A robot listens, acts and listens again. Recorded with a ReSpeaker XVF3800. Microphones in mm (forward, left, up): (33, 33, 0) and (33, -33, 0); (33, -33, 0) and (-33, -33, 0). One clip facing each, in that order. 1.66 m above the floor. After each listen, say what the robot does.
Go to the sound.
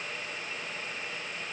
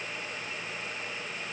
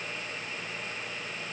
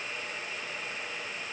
Keep listening.
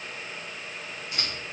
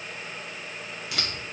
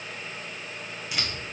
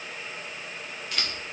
Turn 85° right.
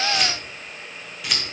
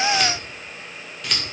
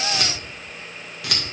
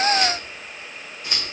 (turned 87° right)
Drive 1.0 m forward.
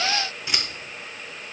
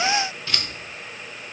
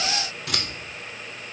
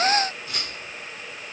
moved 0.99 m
Turn 15° left.
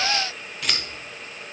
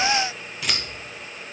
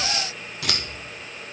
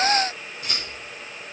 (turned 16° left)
Drive 1.0 m forward.
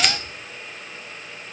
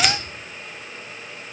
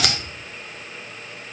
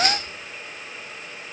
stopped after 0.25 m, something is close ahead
I am next to the scissors.